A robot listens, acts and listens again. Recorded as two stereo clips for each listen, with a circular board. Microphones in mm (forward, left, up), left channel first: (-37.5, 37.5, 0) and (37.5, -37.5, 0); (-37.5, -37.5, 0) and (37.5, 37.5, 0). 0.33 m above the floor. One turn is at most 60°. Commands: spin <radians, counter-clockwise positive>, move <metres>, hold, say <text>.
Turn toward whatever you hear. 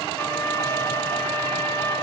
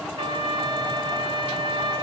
spin 1.05
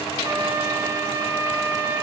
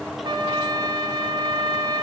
spin 0.17
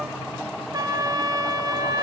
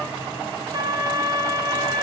say Facing the trumpet, 1 to 2 m away.